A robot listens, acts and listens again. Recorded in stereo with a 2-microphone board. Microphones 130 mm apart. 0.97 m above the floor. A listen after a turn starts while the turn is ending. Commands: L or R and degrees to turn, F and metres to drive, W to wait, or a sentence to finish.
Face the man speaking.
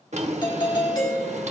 W
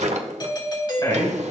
L30
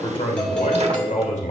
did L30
L105
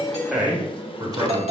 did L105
R35
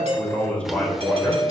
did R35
L10
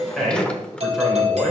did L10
Found it: a man speaking, straight ahead.